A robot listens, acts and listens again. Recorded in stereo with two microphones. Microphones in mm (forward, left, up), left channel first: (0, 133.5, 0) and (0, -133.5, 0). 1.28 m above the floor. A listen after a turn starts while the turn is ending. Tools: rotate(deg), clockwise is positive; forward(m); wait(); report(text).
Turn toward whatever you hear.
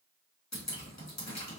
rotate(-90)
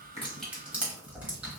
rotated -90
report("Found it: dripping, straight ahead, 1 to 2 m away.")